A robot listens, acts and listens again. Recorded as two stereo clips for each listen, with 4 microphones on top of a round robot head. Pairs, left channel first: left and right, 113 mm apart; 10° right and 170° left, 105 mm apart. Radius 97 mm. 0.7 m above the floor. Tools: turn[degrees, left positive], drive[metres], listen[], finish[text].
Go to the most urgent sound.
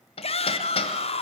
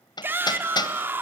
Thought: The shout: 105° left.
Action: turn[105]
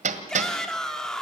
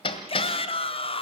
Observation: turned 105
Action: drive[1.0]
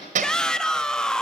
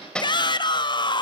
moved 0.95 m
Action: drive[1.0]
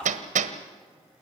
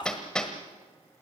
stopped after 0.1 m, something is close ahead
Thought: The shout is now 10° left.
Action: turn[10]
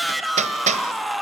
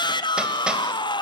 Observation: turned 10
Action: finish[I am next to the shout.]